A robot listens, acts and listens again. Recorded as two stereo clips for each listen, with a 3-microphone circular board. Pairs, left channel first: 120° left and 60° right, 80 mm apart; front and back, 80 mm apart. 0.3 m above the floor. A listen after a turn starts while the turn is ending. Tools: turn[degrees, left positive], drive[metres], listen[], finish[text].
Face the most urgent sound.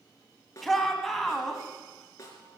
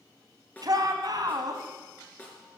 Thought: The shout: 155° right.
Action: turn[-155]
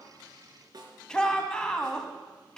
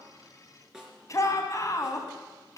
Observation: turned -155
Thought: The shout is now 40° left.
Action: turn[40]
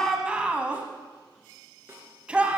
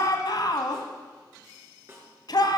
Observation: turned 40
Thought: The shout is now 15° left.
Action: turn[15]
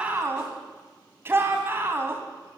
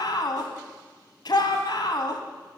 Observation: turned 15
Action: finish[Facing the shout, 1 to 2 m away.]